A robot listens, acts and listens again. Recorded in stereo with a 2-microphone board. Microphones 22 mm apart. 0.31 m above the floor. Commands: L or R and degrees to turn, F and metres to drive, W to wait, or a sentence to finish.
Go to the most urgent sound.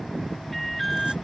L30
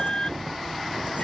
L145
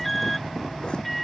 F1.0
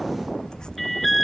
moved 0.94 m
F1.0
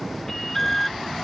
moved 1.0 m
L10
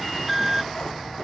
F1.0
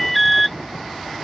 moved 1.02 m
F1.0
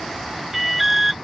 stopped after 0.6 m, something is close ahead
R10
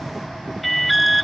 I am next to the alarm.